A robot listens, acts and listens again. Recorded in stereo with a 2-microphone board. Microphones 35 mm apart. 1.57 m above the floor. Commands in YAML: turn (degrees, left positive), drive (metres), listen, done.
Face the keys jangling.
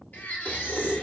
turn: -30
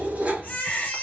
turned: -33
turn: -120
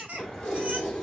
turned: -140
turn: 20
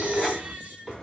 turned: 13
done: "Facing the keys jangling."